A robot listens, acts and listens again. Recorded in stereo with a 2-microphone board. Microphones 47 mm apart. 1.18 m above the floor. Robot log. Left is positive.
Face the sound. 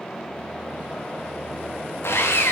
note: The sawing: about 65° left or 115° left.
cmd yaw +65
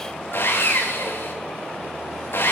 note: So it is at 50° left.
cmd yaw +50
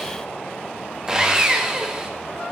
note: The sawing is now 15° right.
cmd yaw -15
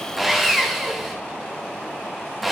end: Found it: sawing, straight ahead.